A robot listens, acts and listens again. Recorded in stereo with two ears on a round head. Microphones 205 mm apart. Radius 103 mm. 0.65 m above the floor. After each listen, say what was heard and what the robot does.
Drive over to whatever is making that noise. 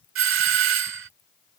The doorbell: about 60° right or 120° right. Turn 60° right.
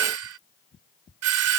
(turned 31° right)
So it is at 80° right. Turn 80° right.
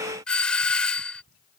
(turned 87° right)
Drive 1.0 m forward.
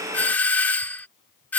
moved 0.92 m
The doorbell is now 10° left. Turn 10° left.
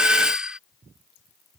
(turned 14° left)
Drive 1.0 m forward.
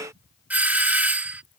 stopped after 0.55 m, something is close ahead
The doorbell is now 10° right. Turn 10° right.
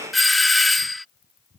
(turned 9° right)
Arrived at the doorbell, straight ahead.